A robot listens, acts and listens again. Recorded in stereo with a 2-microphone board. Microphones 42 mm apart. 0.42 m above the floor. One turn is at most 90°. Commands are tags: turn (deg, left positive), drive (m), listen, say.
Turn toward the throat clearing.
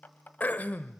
<turn deg="40"/>
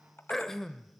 <turn deg="10"/>
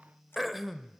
<say>Facing the throat clearing.</say>